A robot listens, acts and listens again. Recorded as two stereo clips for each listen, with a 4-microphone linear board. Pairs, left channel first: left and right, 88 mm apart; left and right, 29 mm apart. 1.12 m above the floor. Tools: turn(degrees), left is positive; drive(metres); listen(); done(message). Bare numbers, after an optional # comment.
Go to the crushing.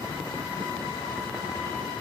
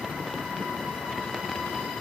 listen()
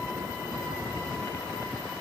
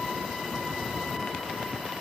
listen()
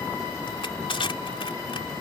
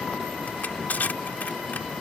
# The crushing: about 70° left or 110° left.
turn(70)
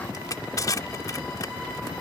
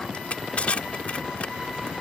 # So it is at 40° left.
turn(40)
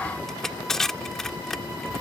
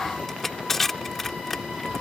drive(1.0)
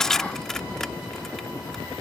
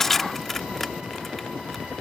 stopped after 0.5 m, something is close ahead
done("Blocked. The crushing is further on, straight ahead.")